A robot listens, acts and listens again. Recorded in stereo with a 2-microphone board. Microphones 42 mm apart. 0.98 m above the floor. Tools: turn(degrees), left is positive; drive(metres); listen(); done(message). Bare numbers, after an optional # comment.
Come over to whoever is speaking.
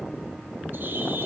listen()
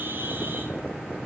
listen()
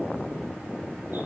done("I can't make out anyone speaking to turn to.")